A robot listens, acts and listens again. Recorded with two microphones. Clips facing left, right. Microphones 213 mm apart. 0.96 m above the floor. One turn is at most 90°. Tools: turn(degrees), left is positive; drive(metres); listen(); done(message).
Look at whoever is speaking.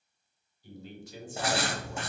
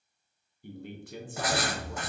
turn(degrees=-55)
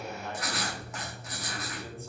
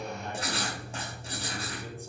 turn(degrees=-15)
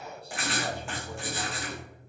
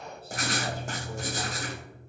done("Facing the man speaking, 1 to 2 m away.")